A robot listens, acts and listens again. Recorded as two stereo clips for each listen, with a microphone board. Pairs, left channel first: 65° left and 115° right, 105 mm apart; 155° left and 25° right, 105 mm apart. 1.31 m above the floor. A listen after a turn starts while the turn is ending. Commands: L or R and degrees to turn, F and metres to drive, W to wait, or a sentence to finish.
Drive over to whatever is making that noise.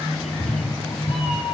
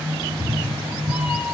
L60
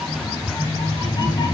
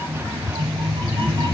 L25
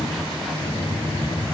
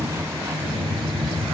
F1.0
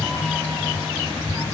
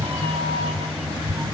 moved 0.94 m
F1.0
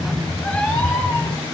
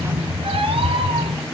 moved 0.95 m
F1.0
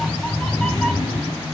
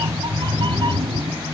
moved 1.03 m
R10
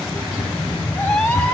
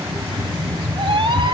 F1.0
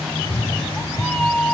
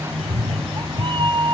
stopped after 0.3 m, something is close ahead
I am next to the cat meowing.